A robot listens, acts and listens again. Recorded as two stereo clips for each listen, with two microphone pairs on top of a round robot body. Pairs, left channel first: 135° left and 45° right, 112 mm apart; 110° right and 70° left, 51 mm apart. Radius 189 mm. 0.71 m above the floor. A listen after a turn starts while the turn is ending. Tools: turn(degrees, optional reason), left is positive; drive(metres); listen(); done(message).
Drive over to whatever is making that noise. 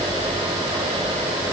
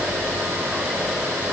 listen()
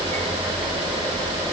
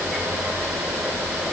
listen()
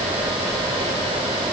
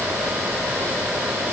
done("I can't make out anything.")